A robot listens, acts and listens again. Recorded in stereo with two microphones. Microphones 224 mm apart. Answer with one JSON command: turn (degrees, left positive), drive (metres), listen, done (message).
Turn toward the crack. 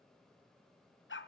{"listen": true}
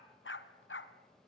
{"listen": true}
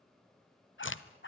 {"turn": 65}
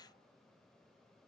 {"listen": true}
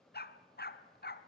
{"done": "I heard a crack, but can't make it out now. It was about straight ahead or 50° left."}